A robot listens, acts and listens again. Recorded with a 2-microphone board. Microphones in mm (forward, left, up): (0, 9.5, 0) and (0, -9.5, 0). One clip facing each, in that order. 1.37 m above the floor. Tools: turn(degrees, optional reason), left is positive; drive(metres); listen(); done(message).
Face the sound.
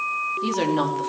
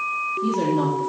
turn(degrees=35, reason="The woman speaking: about 35° left or 145° left.")
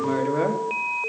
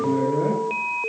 turn(degrees=110, reason="So it is at 110° left.")
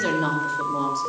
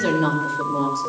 done("Found it: a woman speaking, straight ahead.")